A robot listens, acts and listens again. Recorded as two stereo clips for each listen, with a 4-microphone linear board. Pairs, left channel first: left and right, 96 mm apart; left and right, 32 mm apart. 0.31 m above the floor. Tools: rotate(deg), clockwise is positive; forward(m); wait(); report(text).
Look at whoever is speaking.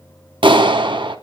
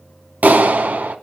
wait()
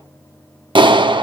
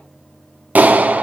wait()
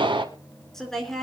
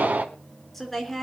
rotate(-30)
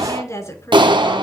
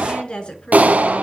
rotate(-145)
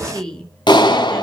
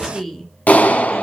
rotate(-10)
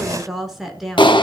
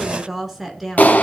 report("Found it: a woman speaking, straight ahead, over 4 m away.")